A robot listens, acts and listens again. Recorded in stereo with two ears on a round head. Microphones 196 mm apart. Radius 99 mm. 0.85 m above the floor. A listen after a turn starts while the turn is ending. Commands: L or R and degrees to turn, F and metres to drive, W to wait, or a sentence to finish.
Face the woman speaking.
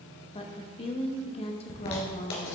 L25
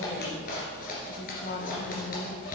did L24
L125
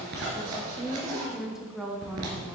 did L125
Facing the woman speaking, 1 to 2 m away.